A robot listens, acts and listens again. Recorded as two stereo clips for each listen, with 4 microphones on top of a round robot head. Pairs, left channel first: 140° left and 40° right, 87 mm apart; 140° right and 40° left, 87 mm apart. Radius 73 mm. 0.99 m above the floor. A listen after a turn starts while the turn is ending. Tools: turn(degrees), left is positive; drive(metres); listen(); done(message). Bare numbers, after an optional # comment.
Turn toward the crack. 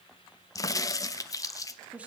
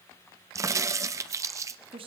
# The crack: 90° left.
turn(90)
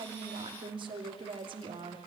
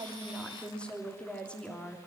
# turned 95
done("I heard a crack from this way, but can't make it out now.")